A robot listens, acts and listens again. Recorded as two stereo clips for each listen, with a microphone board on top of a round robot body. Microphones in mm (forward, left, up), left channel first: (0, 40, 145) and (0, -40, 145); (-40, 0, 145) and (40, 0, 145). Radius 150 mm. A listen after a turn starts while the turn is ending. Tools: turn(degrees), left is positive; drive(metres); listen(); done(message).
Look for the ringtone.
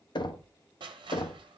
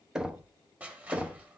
listen()
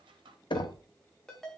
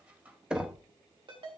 turn(degrees=10)
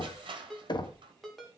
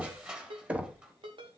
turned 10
done("Facing the ringtone, 1 to 2 m away.")